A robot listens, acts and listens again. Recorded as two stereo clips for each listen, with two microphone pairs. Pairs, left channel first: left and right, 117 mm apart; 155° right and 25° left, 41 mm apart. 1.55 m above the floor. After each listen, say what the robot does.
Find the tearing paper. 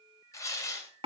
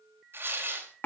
Turn 25° left.
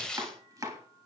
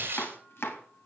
Facing the tearing paper.